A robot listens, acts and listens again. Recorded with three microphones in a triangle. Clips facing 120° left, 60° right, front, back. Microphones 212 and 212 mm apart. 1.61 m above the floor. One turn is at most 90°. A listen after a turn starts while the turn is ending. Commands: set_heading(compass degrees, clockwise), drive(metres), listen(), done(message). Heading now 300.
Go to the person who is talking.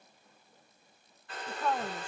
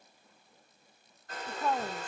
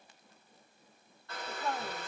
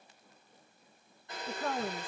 set_heading(30)
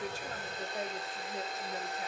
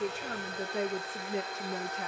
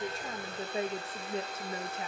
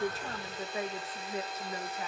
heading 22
set_heading(82)
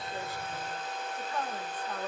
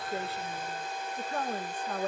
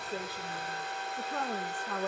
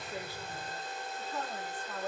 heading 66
set_heading(81)
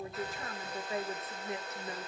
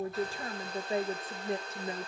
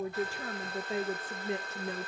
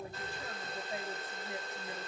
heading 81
drive(1.0)
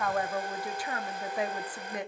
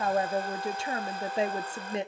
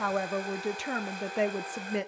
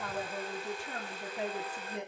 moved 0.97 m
drive(1.0)
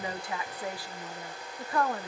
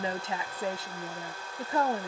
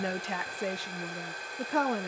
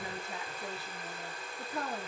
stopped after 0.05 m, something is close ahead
done("I am next to the woman speaking.")